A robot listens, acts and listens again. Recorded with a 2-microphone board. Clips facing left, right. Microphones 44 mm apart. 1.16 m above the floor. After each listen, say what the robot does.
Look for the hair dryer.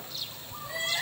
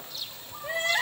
Keep listening.
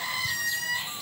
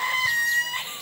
Keep listening.
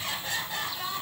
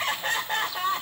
I can't make out a hair dryer, only crying.